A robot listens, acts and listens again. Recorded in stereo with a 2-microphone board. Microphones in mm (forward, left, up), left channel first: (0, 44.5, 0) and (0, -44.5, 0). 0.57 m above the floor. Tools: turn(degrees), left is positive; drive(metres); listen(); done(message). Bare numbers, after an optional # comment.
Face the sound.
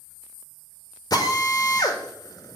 # The drill: about 45° left or 135° left.
turn(45)
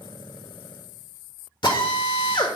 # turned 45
# So it is at 85° left.
turn(85)
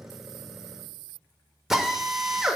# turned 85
done("Facing the drill, 1 to 2 m away.")